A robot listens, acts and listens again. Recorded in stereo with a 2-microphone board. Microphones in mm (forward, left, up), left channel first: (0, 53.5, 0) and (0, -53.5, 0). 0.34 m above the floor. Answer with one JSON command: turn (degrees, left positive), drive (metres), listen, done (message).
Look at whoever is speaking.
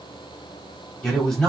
{"turn": 30}
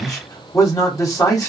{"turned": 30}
{"turn": 140}
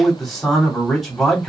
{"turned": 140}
{"done": "Facing the man speaking, 1 to 2 m away."}